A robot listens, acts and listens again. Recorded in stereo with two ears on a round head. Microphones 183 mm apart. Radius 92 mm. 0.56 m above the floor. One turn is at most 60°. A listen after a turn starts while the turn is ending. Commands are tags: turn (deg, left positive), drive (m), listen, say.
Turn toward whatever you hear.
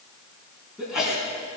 <turn deg="-30"/>
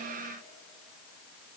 <listen/>
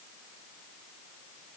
<say>I heard a sneeze, but can't make it out now. It was about 25° left or 145° right.</say>